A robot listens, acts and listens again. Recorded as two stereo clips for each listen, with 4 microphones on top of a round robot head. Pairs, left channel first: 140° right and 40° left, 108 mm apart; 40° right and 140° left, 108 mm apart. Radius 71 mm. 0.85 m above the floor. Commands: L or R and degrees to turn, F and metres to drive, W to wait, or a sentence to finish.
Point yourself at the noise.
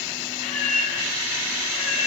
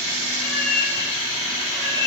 R105
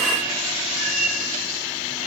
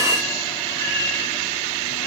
L25
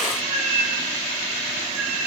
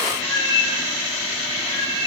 L15
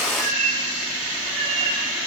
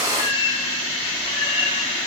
Facing the cat meowing.